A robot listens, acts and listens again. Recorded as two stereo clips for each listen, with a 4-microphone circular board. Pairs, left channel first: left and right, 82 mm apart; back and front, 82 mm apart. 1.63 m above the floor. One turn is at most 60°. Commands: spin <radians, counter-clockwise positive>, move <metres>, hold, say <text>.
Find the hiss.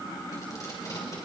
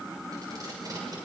hold
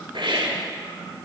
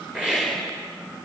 spin -1.05
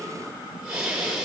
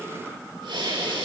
spin -0.17
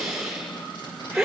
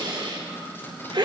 say Found it: a hiss, straight ahead, over 4 m away.